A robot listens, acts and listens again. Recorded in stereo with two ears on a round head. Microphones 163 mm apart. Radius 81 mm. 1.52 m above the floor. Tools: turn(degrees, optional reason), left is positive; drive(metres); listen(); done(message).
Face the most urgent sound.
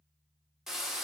listen()
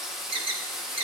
turn(degrees=-30, reason="The alarm: about 30° right or 150° right.")
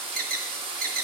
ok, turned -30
turn(degrees=-115, reason="So it is at 115° right.")
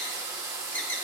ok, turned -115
turn(degrees=15, reason="The alarm is now 15° left.")
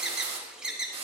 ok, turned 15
done("Facing the alarm.")